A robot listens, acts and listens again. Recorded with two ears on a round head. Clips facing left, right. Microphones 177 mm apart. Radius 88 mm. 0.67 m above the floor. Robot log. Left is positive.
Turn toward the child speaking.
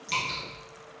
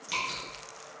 cmd idle
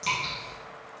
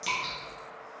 cmd idle
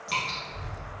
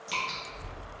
note: The child speaking: about 30° left or 150° left.
cmd yaw +30
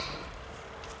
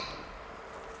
end: Facing the child speaking, 2 to 4 m away.